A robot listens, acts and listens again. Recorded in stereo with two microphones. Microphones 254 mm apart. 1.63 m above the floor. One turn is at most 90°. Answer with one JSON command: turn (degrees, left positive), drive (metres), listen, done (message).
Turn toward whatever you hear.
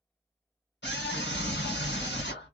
{"turn": 45}
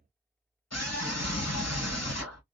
{"turn": 85}
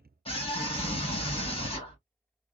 {"turn": 20}
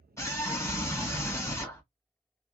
{"turn": 10}
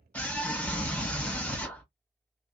{"done": "Facing the scream."}